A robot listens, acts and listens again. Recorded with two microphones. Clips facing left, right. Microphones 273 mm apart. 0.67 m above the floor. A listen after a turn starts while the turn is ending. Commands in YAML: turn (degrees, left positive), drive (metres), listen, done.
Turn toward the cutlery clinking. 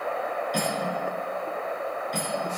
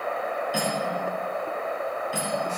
turn: -30
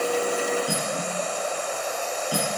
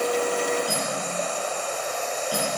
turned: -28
turn: 25
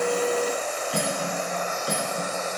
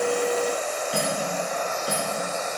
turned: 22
done: "Facing the cutlery clinking."